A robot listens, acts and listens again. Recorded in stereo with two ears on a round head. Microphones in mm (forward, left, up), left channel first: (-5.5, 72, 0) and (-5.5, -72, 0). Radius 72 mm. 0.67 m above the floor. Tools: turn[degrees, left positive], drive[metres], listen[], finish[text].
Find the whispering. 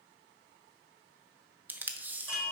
Action: listen[]
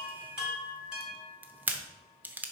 Action: listen[]
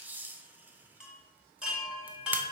Action: finish[I can't make out whispering to turn to.]